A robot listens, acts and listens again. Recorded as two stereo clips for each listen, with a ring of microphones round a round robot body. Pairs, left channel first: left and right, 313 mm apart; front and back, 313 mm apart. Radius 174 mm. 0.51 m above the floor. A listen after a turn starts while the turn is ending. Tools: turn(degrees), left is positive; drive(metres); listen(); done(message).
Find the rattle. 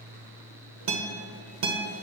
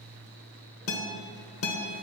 listen()
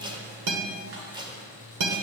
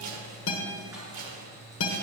listen()
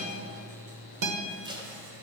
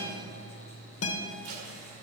done("I can't make out a rattle, only tape being pulled and a guitar.")